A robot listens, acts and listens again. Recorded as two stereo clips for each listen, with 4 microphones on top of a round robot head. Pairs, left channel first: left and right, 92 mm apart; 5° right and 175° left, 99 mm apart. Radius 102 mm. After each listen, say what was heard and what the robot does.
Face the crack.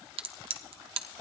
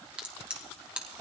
The crack: 105° right. Turn 105° right.
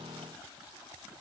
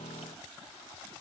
Facing where the crack came from. I can't hear it now.